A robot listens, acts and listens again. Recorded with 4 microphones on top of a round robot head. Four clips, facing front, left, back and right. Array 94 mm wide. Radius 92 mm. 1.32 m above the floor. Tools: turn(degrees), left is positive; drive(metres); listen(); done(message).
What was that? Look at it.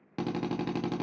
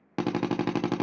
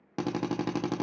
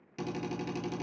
turn(degrees=105)
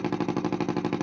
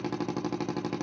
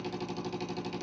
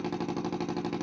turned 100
turn(degrees=10)
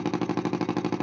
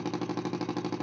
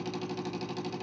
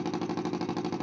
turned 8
done("Found it: a drill, straight ahead, under 1 m away.")